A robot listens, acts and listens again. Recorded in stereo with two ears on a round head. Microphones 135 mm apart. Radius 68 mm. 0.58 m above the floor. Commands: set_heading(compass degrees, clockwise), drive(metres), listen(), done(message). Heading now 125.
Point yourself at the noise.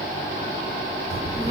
set_heading(150)
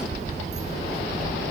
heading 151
set_heading(281)
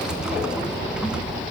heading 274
done("Facing the child speaking.")